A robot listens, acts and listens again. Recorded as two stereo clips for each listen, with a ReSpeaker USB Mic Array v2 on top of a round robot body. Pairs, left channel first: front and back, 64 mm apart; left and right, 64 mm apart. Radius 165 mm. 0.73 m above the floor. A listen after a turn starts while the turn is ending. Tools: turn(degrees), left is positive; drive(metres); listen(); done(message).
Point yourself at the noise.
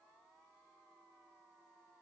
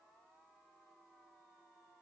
listen()
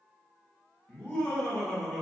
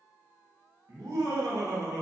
turn(degrees=-80)
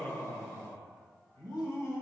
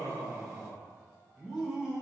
turn(degrees=-20)
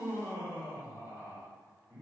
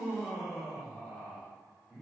done("Facing the laughter, 2 to 4 m away.")